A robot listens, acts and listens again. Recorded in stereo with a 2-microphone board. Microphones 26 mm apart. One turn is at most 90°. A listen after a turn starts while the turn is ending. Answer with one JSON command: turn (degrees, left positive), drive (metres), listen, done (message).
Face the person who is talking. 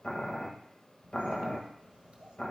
{"turn": -50}
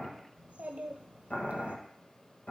{"turn": -80}
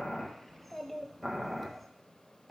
{"turn": 10}
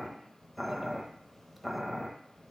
{"done": "Facing the child speaking, under 1 m away."}